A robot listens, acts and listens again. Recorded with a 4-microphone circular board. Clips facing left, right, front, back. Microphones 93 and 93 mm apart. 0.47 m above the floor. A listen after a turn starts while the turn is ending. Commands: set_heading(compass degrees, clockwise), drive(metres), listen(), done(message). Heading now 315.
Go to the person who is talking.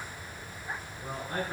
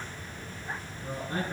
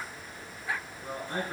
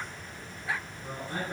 set_heading(240)
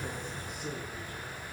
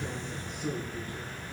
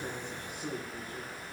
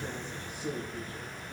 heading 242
drive(1.0)
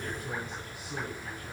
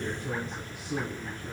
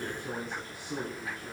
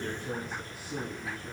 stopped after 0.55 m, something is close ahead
done("Something is in my way. I am facing the man speaking but have not reached it.")